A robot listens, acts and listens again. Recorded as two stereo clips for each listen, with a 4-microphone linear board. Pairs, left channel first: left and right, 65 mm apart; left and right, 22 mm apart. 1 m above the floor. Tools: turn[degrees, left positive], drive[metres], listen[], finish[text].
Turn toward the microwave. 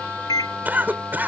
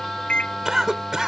Action: turn[90]
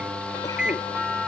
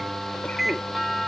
Thought: So it is at 15° right.
Action: turn[-15]
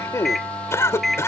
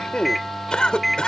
Action: finish[Facing the microwave.]